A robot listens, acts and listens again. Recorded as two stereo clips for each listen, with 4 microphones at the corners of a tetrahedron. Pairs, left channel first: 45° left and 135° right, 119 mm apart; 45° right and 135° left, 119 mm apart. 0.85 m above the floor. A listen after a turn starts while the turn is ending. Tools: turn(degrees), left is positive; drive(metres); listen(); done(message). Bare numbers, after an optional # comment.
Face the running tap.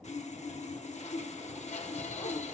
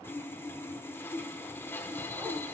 listen()
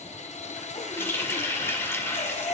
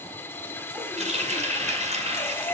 # The running tap: 115° left.
turn(115)
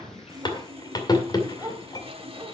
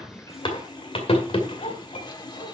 # The running tap is now 10° right.
turn(-10)
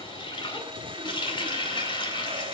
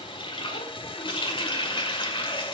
done("Facing the running tap.")